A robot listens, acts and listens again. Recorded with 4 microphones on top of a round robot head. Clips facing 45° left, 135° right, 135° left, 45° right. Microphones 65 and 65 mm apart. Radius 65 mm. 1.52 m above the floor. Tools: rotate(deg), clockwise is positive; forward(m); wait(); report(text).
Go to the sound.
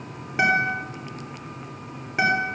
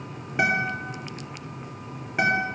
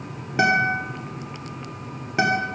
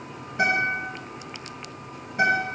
rotate(-135)
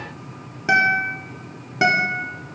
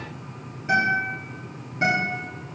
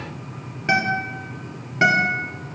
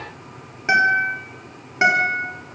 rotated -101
rotate(-30)
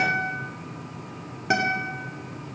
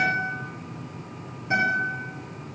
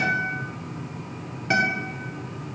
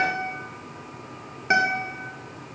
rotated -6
rotate(-25)
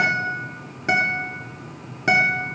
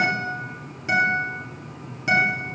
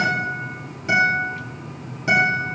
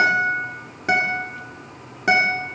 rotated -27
forward(1.0)
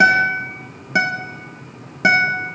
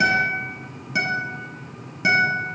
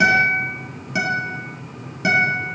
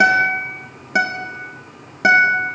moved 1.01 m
forward(1.0)
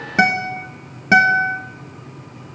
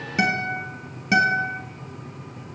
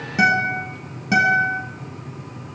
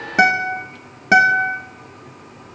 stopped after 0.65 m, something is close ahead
report("I am next to the guitar.")